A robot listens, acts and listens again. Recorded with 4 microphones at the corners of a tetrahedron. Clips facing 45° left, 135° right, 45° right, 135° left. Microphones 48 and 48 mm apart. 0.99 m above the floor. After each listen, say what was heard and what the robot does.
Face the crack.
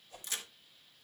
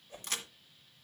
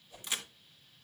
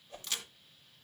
The crack: 115° right. Turn 115° right.
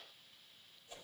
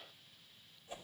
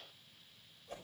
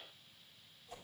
I heard a crack from this way, but can't make it out now.